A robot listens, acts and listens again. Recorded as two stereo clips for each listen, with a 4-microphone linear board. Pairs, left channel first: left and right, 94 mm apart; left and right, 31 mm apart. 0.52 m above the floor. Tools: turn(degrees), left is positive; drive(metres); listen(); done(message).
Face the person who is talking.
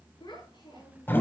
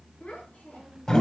turn(degrees=50)
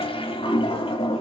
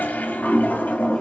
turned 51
listen()
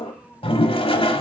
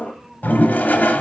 listen()
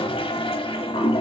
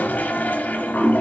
done("I heard a child speaking, but can't make it out now. It was about straight ahead or 80° left.")